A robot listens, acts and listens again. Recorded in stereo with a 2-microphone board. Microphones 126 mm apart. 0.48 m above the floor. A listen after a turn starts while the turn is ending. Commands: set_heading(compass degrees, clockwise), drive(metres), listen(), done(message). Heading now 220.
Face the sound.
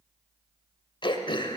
set_heading(175)
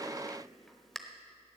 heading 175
done("Facing the throat clearing, under 1 m away.")